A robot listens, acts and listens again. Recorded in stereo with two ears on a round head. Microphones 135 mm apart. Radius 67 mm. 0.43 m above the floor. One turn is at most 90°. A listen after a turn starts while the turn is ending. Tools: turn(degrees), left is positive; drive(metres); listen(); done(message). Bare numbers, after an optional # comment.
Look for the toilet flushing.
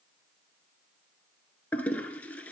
turn(30)
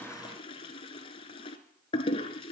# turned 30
# So it is at 140° left.
turn(90)
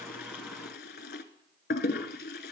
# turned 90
# The toilet flushing is now 75° left.
turn(75)
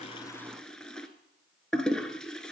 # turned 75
done("Facing the toilet flushing.")